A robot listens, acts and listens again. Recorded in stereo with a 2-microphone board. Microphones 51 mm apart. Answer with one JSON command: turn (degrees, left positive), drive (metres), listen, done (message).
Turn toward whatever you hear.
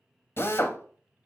{"turn": 45}
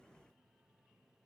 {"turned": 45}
{"listen": true}
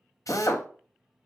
{"turn": 90}
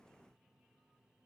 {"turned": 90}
{"listen": true}
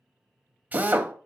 {"turn": -30}
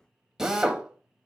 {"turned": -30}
{"turn": -10}
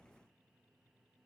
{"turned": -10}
{"listen": true}
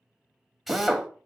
{"done": "Facing the drill."}